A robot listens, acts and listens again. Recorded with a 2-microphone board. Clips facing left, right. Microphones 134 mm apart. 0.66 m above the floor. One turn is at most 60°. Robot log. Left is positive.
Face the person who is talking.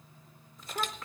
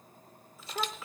cmd yaw -30
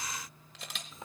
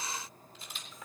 note: So it is at 25° left.
cmd yaw +25
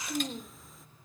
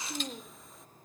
end: Found it: a child speaking, straight ahead, under 1 m away.